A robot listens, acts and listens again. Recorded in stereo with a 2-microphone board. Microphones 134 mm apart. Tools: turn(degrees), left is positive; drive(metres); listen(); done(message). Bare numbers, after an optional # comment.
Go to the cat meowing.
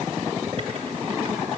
listen()
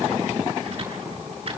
listen()
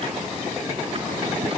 done("I can't make out a cat meowing to turn to.")